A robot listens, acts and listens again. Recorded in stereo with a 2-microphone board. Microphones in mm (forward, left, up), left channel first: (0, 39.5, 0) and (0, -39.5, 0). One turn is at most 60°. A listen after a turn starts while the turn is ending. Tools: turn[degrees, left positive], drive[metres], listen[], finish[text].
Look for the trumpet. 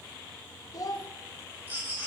Action: listen[]
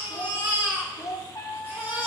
Thought: The trumpet: about 45° left or 135° left.
Action: turn[45]
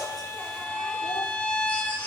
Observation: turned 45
Thought: So it is at 15° left.
Action: turn[15]
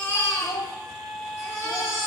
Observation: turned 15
Action: finish[Found it: a trumpet, straight ahead, 1 to 2 m away.]